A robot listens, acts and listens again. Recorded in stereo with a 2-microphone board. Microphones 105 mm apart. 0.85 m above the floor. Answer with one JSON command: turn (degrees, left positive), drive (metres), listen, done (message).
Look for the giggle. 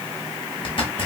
{"listen": true}
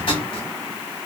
{"listen": true}
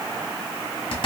{"done": "I can't make out a giggle to turn to."}